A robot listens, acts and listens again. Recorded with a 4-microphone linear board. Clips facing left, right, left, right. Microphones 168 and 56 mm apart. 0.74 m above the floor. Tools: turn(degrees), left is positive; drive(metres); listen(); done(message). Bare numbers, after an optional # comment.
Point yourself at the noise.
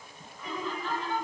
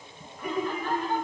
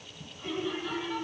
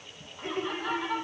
# The laughter: about 55° right or 125° right.
turn(-55)
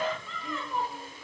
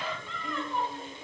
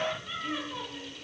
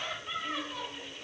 done("Facing the laughter, 2 to 4 m away.")